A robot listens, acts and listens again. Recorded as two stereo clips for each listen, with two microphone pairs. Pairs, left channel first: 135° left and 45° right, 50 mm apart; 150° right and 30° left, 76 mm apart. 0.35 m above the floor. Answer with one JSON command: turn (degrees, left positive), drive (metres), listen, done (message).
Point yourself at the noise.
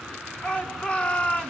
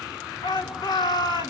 {"turn": -160}
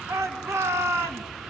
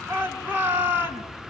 {"turn": -30}
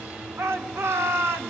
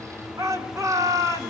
{"turn": -15}
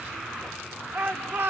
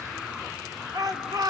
{"done": "Facing the shout, 2 to 4 m away."}